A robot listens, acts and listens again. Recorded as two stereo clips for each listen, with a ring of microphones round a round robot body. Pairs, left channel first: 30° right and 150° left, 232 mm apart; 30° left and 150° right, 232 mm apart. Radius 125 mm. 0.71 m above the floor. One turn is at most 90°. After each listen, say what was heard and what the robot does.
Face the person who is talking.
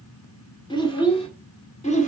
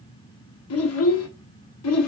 The child speaking: 30° left. Turn 30° left.
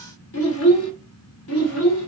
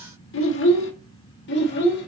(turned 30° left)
The child speaking is now 10° right. Turn 10° right.
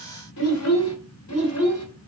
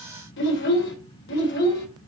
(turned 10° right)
The child speaking is now 10° right. Turn 10° right.
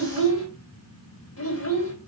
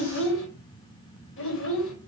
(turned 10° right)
Found it: a child speaking, straight ahead.